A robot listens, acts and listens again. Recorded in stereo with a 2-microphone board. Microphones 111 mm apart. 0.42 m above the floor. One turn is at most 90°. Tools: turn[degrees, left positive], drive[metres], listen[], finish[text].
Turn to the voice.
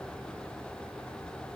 Action: listen[]
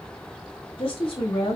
Thought: The woman speaking: about 55° left or 125° left.
Action: turn[55]
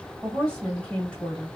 Thought: So it is at 10° left.
Action: turn[10]
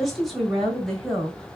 Action: finish[Facing the woman speaking.]